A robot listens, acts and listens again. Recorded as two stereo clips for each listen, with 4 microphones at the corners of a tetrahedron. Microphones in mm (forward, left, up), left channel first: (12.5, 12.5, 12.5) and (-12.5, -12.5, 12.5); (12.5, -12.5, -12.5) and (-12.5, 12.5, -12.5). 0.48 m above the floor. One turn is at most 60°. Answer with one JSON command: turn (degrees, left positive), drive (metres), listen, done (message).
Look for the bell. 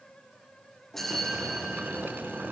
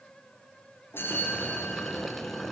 {"turn": -35}
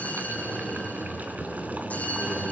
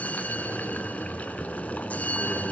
{"done": "Found it: a bell, straight ahead."}